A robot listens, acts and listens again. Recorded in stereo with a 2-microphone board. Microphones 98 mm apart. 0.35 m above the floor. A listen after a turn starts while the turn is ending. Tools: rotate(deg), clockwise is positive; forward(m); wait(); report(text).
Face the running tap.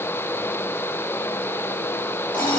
wait()
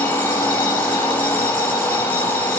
wait()
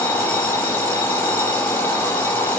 report("I can't make out a running tap, only an alarm clock.")